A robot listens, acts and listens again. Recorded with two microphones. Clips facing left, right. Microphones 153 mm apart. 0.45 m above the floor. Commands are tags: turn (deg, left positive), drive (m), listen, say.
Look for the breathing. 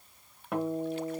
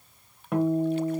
<listen/>
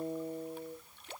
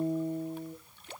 <listen/>
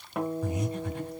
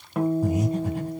<turn deg="-35"/>
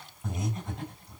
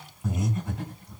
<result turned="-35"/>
<say>Found it: breathing, straight ahead, 2 to 4 m away.</say>